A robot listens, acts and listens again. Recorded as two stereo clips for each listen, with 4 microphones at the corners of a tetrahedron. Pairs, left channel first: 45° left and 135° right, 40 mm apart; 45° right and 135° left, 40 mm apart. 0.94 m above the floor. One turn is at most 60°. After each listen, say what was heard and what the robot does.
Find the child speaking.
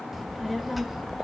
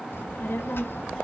The child speaking: 45° right. Turn 45° right.
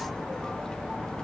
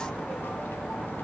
The child speaking is now 25° right. Turn 25° right.
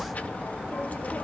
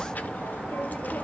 Found it: a child speaking, straight ahead.